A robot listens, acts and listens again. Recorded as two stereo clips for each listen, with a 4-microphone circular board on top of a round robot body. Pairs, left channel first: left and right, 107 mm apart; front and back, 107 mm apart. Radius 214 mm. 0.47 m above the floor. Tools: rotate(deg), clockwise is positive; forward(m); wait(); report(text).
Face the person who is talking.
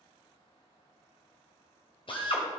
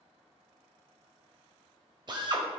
wait()
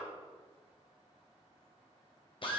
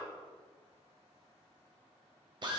wait()
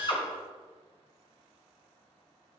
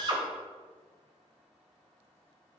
report("I can't make out anyone speaking, only a drill.")